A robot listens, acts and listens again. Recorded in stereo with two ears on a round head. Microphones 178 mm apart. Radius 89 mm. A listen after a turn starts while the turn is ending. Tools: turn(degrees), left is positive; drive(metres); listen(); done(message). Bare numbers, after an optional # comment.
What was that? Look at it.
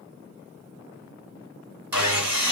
turn(-30)
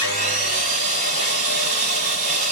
# So it is at 140° right.
turn(-140)
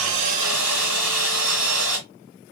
done("Found it: sawing, straight ahead, 2 to 4 m away.")